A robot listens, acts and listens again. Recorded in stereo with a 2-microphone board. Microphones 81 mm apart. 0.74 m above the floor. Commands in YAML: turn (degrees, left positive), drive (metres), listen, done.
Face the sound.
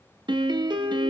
turn: -60
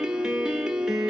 done: "Found it: a piano, straight ahead."